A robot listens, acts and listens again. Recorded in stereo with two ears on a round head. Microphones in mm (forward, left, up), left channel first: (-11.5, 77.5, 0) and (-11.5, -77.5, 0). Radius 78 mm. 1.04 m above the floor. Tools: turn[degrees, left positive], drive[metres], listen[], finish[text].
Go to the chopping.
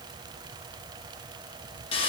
Action: listen[]
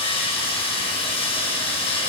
Action: listen[]
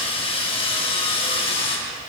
Action: finish[I can't make out chopping to turn to.]